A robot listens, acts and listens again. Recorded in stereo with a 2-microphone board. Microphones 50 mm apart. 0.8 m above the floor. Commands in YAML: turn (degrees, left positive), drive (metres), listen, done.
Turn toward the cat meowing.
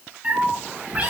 turn: -30
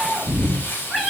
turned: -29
done: "Found it: a cat meowing, straight ahead."